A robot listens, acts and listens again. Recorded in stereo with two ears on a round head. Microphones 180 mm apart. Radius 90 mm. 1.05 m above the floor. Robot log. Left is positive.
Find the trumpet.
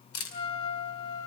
note: The trumpet: about 30° left or 150° left.
cmd yaw +30
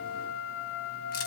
note: So it is at 115° left.
cmd yaw +115
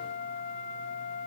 note: The trumpet is now 40° left.
cmd yaw +40
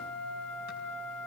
end: Facing the trumpet, 2 to 4 m away.